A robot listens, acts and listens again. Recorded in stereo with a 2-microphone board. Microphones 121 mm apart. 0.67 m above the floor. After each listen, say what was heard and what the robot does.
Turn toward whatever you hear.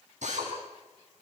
Turn 90° right.
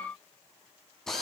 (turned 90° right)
Found it: a drill, straight ahead.